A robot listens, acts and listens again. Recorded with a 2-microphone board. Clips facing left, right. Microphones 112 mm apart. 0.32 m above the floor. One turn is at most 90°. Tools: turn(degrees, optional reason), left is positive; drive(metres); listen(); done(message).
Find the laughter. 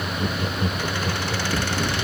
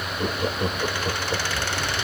turn(degrees=-40, reason="The laughter: about 40° right or 140° right.")
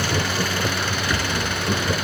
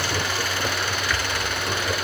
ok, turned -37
done("Found it: laughter, straight ahead.")